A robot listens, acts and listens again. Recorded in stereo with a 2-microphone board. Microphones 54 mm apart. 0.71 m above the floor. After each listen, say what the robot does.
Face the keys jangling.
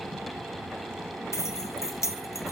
Turn 90° left.
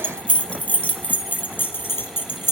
Turn 45° left.
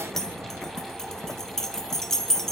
Turn 10° left.
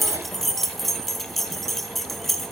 Facing the keys jangling, 2 to 4 m away.